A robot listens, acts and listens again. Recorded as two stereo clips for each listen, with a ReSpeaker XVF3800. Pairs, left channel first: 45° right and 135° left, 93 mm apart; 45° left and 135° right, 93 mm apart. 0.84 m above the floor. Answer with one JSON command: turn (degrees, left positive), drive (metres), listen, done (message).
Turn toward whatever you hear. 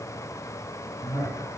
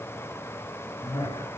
{"turn": 10}
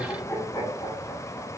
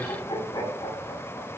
{"done": "Found it: laughter, straight ahead, over 4 m away."}